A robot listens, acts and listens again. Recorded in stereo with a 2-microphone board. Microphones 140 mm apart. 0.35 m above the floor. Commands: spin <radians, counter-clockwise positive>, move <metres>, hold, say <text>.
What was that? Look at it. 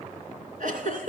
spin -1.22
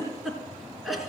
say Facing the giggle.